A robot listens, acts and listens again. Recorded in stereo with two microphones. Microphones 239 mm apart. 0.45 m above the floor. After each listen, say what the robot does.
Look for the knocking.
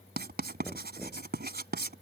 Turn 30° left.
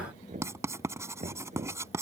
Turn 30° right.
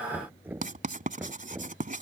Turn 10° right.
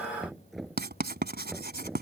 Facing the knocking.